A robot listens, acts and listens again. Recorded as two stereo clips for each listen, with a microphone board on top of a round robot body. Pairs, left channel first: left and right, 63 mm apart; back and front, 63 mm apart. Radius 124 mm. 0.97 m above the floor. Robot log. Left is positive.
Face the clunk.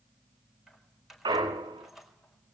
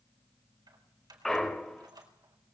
note: The clunk: 95° right.
cmd yaw -95
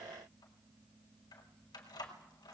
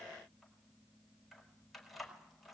end: I heard a clunk from this way, but can't make it out now.